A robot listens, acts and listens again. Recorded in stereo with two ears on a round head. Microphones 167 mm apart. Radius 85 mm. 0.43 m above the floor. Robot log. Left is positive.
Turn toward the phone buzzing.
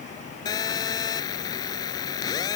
note: The phone buzzing: about 20° left or 160° left.
cmd yaw +20
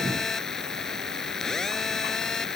end: Found it: a phone buzzing, straight ahead.